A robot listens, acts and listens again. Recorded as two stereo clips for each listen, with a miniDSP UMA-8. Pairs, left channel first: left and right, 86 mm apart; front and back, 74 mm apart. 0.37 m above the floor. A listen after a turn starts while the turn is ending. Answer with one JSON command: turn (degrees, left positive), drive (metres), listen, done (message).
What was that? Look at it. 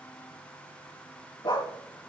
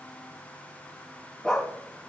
{"turn": 80}
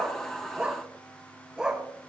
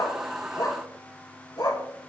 {"turn": -10}
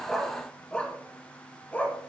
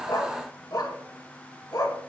{"turn": 20}
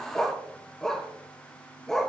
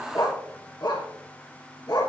{"done": "Found it: a dog barking, straight ahead, 2 to 4 m away."}